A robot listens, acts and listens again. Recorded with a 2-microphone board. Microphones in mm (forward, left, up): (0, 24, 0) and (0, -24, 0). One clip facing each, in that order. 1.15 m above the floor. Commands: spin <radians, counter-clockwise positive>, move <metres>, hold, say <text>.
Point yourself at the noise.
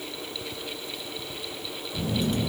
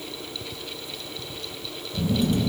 spin 0.52
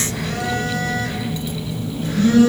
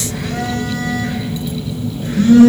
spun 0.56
spin -0.61
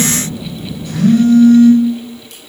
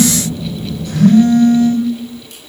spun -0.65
say Facing the phone buzzing, 1 to 2 m away.